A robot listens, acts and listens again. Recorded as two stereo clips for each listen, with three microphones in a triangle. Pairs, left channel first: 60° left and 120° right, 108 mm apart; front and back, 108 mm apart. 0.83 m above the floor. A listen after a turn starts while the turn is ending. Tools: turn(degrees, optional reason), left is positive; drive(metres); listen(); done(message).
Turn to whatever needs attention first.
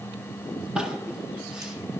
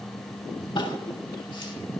listen()
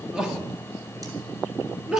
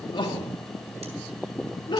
turn(degrees=-35, reason="The crying: 35° right.")
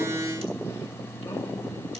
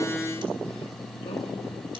listen()
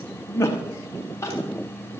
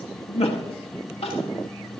done("Found it: crying, straight ahead.")